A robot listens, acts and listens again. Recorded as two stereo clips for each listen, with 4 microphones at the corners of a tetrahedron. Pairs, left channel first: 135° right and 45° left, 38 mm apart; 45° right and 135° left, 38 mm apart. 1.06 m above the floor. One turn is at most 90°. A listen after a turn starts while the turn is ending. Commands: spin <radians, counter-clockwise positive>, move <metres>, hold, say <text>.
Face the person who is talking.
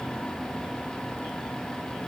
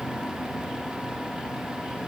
hold
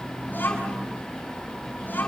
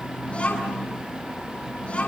spin -1.57
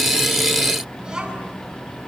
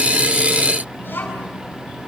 spin -0.35
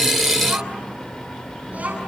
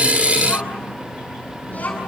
say Facing the child speaking, over 4 m away.